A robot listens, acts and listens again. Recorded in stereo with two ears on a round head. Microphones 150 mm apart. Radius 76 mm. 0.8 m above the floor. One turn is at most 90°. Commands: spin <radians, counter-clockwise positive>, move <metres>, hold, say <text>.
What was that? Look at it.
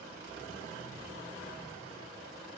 hold
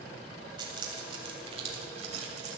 spin -0.70
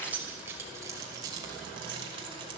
spin -0.52
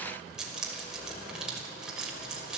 say Found it: keys jangling, straight ahead, 2 to 4 m away.